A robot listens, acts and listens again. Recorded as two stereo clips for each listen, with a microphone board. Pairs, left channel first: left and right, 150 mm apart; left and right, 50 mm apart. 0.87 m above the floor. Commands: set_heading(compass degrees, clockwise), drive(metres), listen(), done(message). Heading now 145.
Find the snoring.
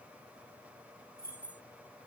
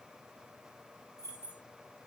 listen()
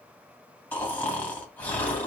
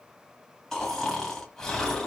set_heading(115)
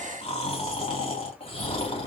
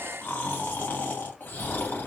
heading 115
set_heading(340)
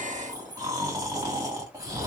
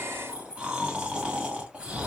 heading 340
set_heading(5)
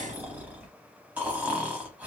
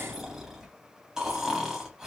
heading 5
set_heading(15)
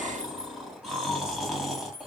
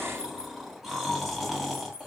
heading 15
done("Facing the snoring, 2 to 4 m away.")